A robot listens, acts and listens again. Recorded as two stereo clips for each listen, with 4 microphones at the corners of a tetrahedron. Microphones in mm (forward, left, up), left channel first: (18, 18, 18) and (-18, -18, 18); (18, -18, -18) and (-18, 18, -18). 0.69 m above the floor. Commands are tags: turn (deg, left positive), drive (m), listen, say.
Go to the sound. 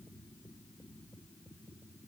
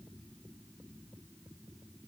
<listen/>
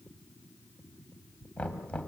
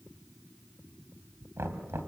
<turn deg="110"/>
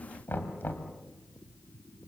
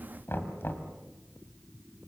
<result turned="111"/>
<drive m="1.0"/>
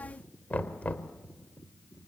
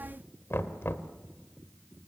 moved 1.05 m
<turn deg="-15"/>
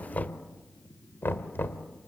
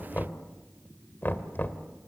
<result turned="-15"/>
<drive m="1.0"/>
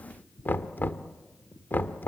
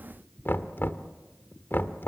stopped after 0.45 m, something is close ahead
<say>I am next to the knocking.</say>